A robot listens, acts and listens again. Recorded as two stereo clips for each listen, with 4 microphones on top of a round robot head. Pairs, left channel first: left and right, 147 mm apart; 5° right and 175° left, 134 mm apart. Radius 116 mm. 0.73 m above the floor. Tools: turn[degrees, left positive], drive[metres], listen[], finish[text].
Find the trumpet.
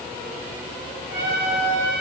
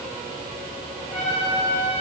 Thought: The trumpet: 60° right.
Action: turn[-60]
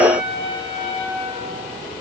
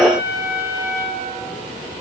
Action: finish[Found it: a trumpet, straight ahead, over 4 m away.]